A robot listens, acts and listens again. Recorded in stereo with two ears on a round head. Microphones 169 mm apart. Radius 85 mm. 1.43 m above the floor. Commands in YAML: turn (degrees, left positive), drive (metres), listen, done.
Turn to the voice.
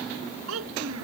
turn: -90
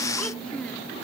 listen: true
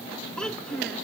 done: "Facing the child speaking."